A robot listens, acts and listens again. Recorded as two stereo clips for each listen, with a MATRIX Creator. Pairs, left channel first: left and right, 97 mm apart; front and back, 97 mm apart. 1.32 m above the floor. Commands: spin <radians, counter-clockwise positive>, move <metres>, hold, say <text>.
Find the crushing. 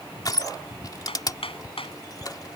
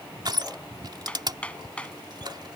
spin 2.36
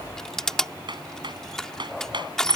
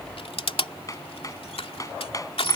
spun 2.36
say Facing the crushing.